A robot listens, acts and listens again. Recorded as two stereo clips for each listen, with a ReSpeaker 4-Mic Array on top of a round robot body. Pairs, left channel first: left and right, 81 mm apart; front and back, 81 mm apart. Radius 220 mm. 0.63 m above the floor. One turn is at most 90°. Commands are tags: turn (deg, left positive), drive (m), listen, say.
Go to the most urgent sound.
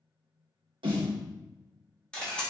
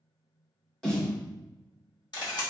<listen/>
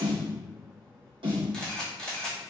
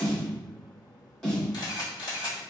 <listen/>
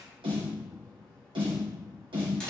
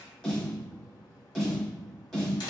<say>I can't make out anything urgent, only a snare drum and a camera shutter.</say>